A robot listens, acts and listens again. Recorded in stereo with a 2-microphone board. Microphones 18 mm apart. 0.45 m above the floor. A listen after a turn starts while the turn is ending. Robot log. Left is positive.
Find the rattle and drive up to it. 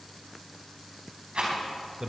note: The rattle: about 70° right or 110° right.
cmd yaw -70
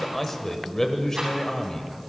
cmd idle
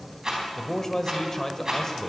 note: So it is at 35° right.
cmd yaw -35
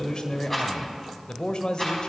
note: The rattle is now 10° left.
cmd yaw +10
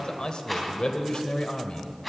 cmd fwd 1.0
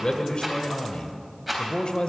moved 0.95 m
cmd fwd 1.0
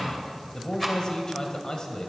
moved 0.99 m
cmd fwd 1.0
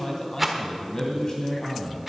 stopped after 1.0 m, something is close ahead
note: The rattle is now 15° right.
cmd yaw -15
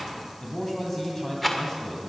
end: Arrived at the rattle, straight ahead.